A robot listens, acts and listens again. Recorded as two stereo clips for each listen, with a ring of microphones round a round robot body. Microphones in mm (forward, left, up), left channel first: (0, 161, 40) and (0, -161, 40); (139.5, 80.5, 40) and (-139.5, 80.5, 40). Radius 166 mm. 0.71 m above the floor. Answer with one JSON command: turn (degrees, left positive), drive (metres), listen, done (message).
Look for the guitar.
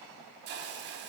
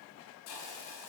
{"listen": true}
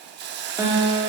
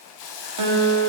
{"turn": -170}
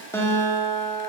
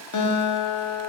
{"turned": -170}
{"turn": 10}
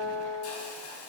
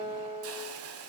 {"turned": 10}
{"done": "Found it: a guitar, straight ahead."}